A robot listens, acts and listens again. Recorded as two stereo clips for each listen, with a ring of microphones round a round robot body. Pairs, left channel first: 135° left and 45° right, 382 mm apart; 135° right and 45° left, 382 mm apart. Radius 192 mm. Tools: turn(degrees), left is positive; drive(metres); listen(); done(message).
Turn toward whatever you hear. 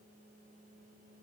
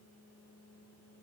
listen()
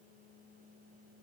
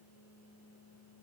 listen()
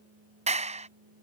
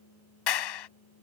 turn(degrees=-115)
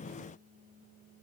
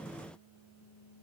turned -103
turn(degrees=-15)
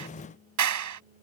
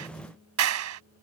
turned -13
done("Found it: a clap, straight ahead.")